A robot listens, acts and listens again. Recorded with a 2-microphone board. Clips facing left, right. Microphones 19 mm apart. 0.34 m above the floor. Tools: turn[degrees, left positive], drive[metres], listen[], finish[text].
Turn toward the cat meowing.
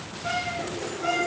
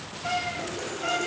Thought: The cat meowing: about 25° left or 155° left.
Action: turn[25]
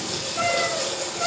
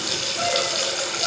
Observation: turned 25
Thought: So it is at 120° left.
Action: turn[120]
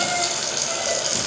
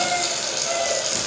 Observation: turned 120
Action: listen[]
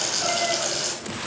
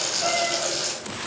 Action: listen[]
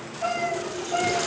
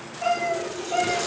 Thought: The cat meowing is now 35° right.
Action: turn[-35]
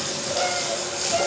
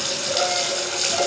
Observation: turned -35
Action: listen[]
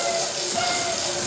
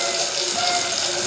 Action: listen[]
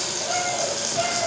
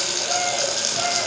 Action: finish[Facing the cat meowing, 2 to 4 m away.]